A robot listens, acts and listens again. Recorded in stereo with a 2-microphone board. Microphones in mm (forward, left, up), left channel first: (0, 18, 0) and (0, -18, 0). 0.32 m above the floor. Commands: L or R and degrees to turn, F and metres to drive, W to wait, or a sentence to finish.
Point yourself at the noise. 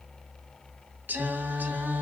R60
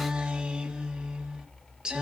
R30
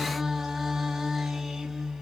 R10
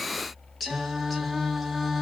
Found it: singing, straight ahead, 1 to 2 m away.